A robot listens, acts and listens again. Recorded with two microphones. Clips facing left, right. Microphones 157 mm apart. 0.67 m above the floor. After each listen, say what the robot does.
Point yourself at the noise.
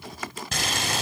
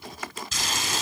Turn 65° left.
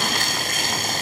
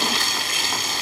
Turn 50° left.
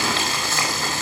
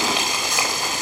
Turn 15° right.
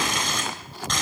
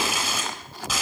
Found it: boiling, straight ahead, 2 to 4 m away.